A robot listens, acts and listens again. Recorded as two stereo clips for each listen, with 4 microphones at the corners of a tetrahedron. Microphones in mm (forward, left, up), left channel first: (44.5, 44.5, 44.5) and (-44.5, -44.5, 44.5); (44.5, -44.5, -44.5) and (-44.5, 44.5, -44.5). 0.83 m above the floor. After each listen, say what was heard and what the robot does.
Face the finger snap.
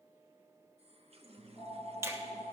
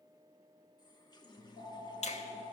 The finger snap: 65° right. Turn 65° right.
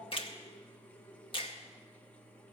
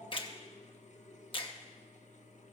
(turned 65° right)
Facing the finger snap, under 1 m away.